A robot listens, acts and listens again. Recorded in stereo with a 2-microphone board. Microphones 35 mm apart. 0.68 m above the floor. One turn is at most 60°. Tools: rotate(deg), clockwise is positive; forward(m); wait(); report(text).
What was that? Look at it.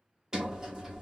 rotate(20)
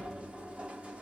rotate(60)
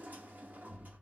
rotate(60)
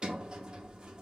rotate(35)
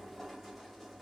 report("Found it: a sliding door, straight ahead.")